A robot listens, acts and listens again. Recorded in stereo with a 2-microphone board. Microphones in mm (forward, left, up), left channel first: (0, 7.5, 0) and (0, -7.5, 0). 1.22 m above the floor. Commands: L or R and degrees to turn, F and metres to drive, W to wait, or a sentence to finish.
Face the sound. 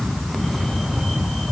W
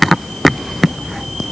W
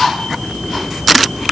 I can't make out anything to turn to.